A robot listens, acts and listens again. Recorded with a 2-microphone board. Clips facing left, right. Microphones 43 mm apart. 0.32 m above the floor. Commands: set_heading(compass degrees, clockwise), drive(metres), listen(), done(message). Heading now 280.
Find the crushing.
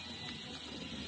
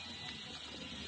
listen()
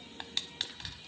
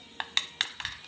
set_heading(350)
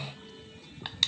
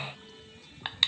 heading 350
set_heading(15)
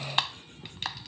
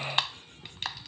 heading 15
done("Found it: crushing, straight ahead.")